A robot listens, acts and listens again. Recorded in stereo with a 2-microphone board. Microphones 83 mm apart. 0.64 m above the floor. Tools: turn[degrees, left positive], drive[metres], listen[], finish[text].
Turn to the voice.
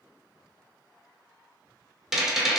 Action: listen[]
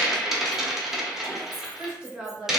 Action: turn[-30]
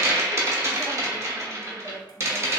Thought: So it is at 20° left.
Action: turn[20]
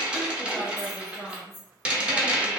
Action: finish[Facing the woman speaking, 1 to 2 m away.]